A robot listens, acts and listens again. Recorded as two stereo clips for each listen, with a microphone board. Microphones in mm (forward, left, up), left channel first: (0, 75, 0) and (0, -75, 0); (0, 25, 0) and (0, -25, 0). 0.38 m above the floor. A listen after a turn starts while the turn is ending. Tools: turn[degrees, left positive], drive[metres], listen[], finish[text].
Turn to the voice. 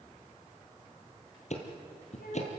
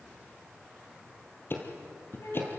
Action: turn[90]
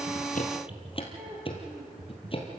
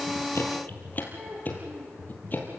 Thought: So it is at 10° right.
Action: turn[-10]
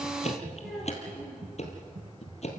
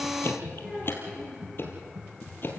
Action: finish[Facing the child speaking, over 4 m away.]